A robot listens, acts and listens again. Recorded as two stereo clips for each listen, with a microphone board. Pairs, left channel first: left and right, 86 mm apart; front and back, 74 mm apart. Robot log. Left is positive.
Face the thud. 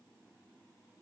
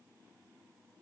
cmd idle
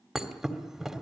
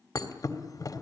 end: Found it: a thud, straight ahead.